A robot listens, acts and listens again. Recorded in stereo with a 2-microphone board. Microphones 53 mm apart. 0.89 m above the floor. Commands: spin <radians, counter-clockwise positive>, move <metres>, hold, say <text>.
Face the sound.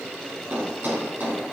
spin -0.61
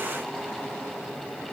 hold
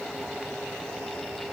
say I heard a thud, but can't make it out now. It was about straight ahead or 110° right.